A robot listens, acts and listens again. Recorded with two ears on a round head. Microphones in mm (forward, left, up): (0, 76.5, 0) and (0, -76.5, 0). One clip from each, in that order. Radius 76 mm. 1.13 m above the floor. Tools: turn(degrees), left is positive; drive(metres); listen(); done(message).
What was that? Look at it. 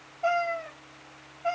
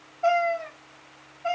turn(degrees=-20)
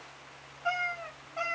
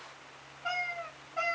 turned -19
turn(degrees=10)
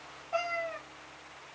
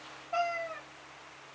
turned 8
turn(degrees=10)
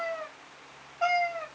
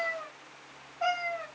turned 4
turn(degrees=30)
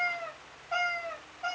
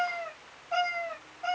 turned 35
done("Found it: a cat meowing, straight ahead, 2 to 4 m away.")